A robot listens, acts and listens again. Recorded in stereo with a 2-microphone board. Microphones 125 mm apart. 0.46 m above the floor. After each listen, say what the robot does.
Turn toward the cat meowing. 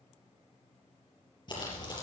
Keep listening.
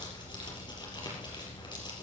Keep listening.
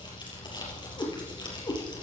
Turn 25° left.
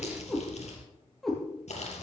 Facing the cat meowing, over 4 m away.